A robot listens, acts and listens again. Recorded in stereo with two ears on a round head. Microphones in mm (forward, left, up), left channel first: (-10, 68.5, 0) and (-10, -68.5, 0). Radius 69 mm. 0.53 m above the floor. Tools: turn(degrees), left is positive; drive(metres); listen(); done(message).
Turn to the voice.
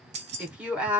turn(degrees=-30)
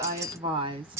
turn(degrees=-140)
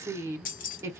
turn(degrees=-25)
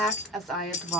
done("Facing the woman speaking, 1 to 2 m away.")